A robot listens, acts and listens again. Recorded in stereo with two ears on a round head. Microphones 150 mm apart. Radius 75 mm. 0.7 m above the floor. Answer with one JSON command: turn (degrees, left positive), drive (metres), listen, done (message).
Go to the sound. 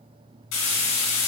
{"turn": 90}
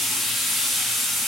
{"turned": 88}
{"drive": 1.0}
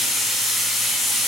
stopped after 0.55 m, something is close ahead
{"done": "Blocked. The frying is further on, straight ahead."}